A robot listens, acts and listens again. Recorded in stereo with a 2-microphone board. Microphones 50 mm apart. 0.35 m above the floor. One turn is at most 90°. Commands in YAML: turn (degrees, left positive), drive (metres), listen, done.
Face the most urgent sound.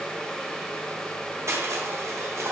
listen: true
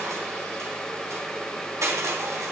listen: true
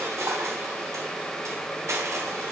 done: "I can't make out anything urgent, only crushing."